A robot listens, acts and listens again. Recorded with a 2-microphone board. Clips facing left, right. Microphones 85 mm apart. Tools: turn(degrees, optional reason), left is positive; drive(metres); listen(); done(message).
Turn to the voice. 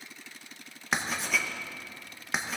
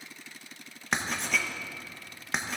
listen()
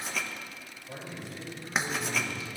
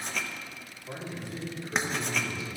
turn(degrees=-90)
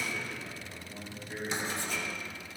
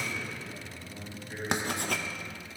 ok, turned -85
done("Found it: a man speaking, straight ahead.")